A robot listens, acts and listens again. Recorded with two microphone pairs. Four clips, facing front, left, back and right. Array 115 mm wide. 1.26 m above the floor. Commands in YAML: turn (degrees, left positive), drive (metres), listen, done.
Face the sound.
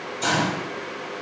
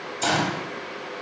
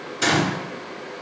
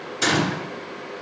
turn: -120
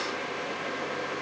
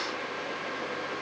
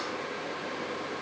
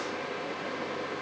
done: "I heard a gunshot from this way, but can't make it out now."